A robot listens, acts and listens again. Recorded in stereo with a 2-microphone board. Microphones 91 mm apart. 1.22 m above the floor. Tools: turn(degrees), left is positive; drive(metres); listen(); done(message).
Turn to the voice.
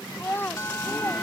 turn(degrees=25)
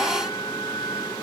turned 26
listen()
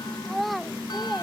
done("Found it: a child speaking, straight ahead.")